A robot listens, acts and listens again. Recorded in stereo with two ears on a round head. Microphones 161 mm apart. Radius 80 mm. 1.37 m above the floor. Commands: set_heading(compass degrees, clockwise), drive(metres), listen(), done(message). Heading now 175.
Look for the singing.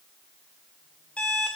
listen()
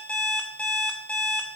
listen()
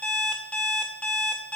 done("I can't make out singing to turn to.")